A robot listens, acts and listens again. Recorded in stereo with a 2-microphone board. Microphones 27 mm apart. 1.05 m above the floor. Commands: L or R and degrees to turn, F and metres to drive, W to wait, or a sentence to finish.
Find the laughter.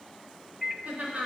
R90
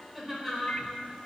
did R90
Found it: laughter, straight ahead.